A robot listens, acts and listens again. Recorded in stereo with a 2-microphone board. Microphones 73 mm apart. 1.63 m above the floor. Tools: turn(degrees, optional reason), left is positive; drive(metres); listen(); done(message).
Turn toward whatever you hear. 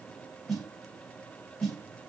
turn(degrees=30)
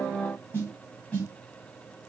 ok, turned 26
turn(degrees=155, reason="So it is at 155° left.")
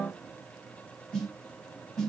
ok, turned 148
done("Facing the snare drum, 2 to 4 m away.")